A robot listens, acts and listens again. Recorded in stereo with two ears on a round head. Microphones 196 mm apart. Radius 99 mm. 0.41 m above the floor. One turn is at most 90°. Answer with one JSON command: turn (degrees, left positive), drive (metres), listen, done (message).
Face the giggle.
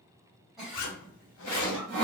{"turn": 30}
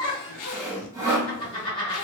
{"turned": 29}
{"turn": 90}
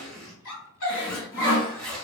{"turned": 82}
{"turn": 70}
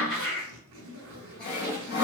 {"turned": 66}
{"done": "Found it: a giggle, straight ahead."}